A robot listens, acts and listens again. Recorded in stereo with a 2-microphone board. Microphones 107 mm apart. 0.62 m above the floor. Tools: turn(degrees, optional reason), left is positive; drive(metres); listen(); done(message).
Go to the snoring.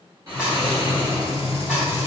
turn(degrees=-35, reason="The snoring: about 35° right or 145° right.")
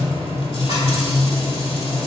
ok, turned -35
listen()
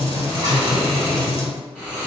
turn(degrees=-10, reason="So it is at 10° right.")
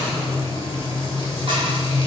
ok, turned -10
listen()
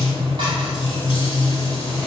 listen()
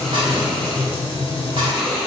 drive(metres=1.0)
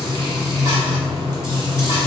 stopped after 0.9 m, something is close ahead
listen()
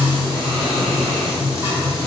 listen()
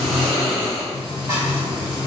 done("I am next to the snoring.")